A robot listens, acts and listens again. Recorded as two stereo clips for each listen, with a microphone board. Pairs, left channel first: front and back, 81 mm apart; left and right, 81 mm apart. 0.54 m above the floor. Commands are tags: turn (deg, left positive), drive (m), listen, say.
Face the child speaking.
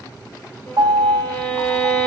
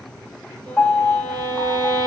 <listen/>
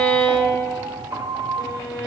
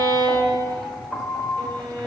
<listen/>
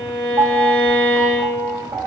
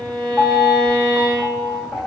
<say>I can't make out a child speaking, only a violin and a piano.</say>